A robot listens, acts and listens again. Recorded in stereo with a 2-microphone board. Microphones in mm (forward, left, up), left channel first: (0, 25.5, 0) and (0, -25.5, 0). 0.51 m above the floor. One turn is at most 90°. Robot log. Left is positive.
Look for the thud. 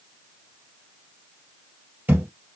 note: The thud: about 35° right or 145° right.
cmd yaw -35
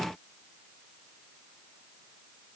cmd idle
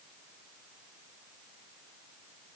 end: I heard a thud, but can't make it out now. It was about straight ahead or 110° right.